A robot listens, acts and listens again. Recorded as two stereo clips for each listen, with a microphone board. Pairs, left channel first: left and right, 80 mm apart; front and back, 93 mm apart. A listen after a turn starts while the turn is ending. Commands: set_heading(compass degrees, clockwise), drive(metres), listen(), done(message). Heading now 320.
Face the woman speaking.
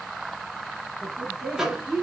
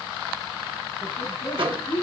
set_heading(330)
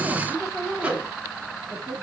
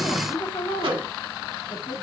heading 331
done("Found it: a woman speaking, straight ahead, 1 to 2 m away.")